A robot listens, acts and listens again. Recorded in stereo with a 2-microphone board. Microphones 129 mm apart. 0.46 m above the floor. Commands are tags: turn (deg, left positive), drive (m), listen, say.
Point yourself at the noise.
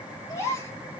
<turn deg="20"/>
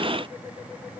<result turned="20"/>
<listen/>
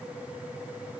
<say>I heard a gasp, but can't make it out now. It was about straight ahead or 140° left.</say>